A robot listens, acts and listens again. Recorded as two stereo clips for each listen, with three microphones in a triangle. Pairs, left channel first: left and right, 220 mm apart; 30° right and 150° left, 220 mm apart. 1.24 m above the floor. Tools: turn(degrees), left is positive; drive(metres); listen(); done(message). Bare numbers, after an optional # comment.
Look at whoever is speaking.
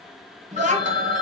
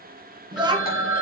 # The child speaking: 140° right.
turn(-140)
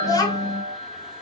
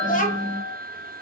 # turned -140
# The child speaking is now 15° left.
turn(15)
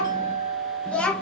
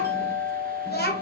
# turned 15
done("Found it: a child speaking, straight ahead, 1 to 2 m away.")